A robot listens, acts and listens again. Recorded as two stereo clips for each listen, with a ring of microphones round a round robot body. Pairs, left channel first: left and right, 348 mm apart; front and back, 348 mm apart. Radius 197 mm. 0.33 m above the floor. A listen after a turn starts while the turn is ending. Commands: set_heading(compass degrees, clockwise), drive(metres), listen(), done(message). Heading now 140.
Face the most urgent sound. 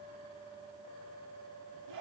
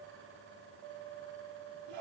listen()
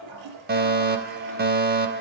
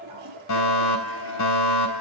set_heading(175)
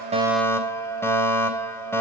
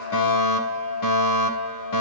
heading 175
set_heading(165)
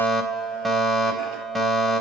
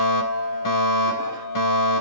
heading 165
done("Found it: a fire alarm, straight ahead.")